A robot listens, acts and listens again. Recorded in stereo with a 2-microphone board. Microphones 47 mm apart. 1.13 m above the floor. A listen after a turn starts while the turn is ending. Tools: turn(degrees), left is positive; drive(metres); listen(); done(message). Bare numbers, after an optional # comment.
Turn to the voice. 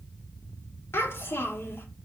# The child speaking: about 55° left or 125° left.
turn(55)
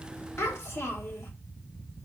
# So it is at 65° left.
turn(65)
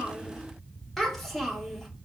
done("Facing the child speaking.")